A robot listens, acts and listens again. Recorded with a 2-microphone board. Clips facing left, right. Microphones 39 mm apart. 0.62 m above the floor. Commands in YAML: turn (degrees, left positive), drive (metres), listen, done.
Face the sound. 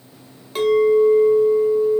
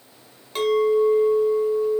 turn: 30
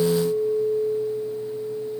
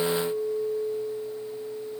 turn: 145
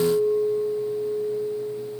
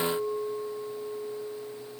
turn: -25
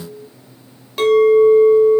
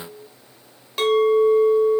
done: "Found it: a clink, straight ahead, 1 to 2 m away."